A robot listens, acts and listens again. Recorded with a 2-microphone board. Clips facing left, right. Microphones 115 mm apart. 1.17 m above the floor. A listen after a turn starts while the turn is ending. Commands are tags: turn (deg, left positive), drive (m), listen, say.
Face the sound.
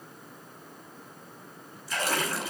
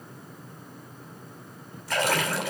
<turn deg="-50"/>
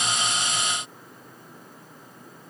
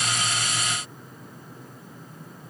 <listen/>
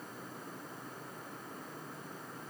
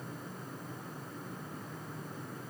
<say>I heard a splash, but can't make it out now. It was about straight ahead or 80° right.</say>